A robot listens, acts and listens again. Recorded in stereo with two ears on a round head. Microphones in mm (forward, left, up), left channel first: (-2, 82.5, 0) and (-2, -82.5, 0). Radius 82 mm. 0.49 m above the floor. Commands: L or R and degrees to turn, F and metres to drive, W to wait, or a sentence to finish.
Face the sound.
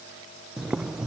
R30
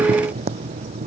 R145
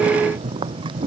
R25
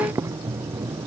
R15
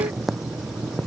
Facing the boiling.